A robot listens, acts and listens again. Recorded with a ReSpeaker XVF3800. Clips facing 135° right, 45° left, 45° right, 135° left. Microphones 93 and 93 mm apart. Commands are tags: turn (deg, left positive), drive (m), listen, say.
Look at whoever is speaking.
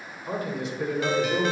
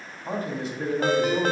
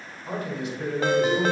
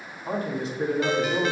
<turn deg="85"/>
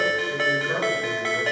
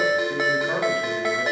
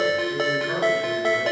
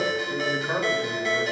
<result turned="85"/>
<turn deg="55"/>
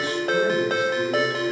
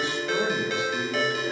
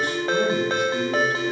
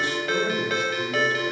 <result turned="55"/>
<listen/>
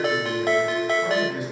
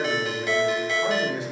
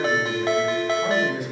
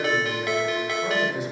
<turn deg="-20"/>
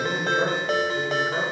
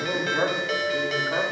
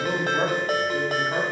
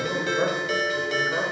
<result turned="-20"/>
<say>Facing the man speaking, 2 to 4 m away.</say>